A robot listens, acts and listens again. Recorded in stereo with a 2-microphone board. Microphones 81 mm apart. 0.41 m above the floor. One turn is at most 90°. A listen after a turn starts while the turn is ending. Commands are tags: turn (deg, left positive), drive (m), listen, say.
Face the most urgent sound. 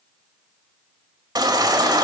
<turn deg="-55"/>
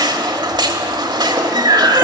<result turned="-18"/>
<turn deg="-90"/>
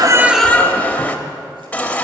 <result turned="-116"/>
<turn deg="20"/>
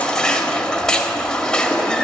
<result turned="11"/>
<turn deg="10"/>
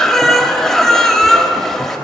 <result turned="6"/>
<say>Found it: a baby crying, straight ahead.</say>